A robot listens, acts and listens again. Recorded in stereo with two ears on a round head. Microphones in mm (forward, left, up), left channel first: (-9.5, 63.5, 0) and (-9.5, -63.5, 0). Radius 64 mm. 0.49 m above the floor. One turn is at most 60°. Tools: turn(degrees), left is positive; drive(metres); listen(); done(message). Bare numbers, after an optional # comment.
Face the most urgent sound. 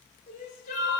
# The crying: about 55° left or 125° left.
turn(55)
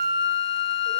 listen()
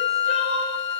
done("Found it: crying, straight ahead.")